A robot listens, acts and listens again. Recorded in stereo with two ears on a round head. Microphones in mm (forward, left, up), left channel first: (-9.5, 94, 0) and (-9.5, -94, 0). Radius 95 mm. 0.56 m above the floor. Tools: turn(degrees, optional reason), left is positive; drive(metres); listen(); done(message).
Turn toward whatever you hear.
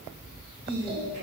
turn(degrees=-40, reason="The singing: about 40° right or 140° right.")
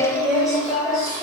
done("Found it: singing, straight ahead.")